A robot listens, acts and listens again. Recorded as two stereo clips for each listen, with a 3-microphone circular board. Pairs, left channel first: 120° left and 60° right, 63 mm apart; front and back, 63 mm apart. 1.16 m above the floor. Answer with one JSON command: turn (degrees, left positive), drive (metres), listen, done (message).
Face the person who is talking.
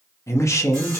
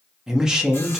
{"turn": 100}
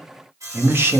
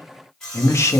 {"turn": -20}
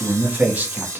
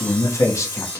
{"done": "Facing the man speaking, under 1 m away."}